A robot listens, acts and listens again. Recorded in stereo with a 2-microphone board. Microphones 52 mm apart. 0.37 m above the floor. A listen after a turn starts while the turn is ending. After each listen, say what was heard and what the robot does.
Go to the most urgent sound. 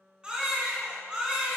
The baby crying: about 20° right or 160° right. Turn 20° right.
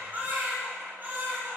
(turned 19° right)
So it is at 140° right. Turn 140° right.
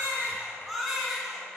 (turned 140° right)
Drive 1.0 m forward.
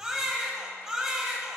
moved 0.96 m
The baby crying is now 10° right. Turn 10° right.
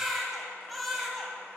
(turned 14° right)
Drive 1.0 m forward.
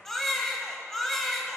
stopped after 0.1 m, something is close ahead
The baby crying is now 10° left. Turn 10° left.
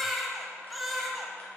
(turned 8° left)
Arrived at the baby crying, straight ahead.